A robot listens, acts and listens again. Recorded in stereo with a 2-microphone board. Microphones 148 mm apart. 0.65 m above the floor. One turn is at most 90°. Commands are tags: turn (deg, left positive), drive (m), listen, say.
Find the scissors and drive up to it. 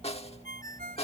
<listen/>
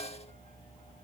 <listen/>
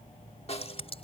<turn deg="45"/>
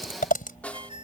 <turn deg="90"/>
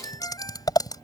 <turn deg="25"/>
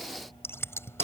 <turn deg="15"/>
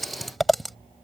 <drive m="1.0"/>
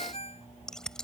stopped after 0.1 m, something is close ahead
<say>Something is in my way. I am facing the scissors but have not reached it.</say>